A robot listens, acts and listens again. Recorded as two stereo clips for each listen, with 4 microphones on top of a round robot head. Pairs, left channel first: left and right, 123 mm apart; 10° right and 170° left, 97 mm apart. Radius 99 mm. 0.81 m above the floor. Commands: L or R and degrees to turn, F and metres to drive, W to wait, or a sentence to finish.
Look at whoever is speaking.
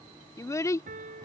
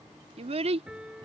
L160
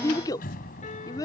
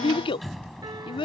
L25
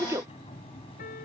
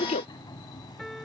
R20
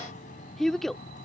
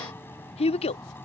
Found it: a child speaking, straight ahead.